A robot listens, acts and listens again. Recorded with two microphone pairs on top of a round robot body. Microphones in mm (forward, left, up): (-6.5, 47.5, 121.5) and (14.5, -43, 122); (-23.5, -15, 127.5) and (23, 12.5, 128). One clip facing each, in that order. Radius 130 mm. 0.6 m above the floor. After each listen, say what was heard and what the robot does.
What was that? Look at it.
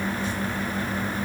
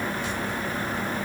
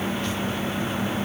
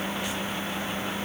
Keep listening.
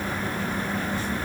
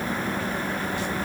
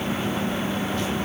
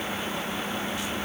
Keep listening.
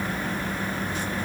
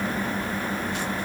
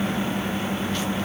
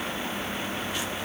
I can't make out anything.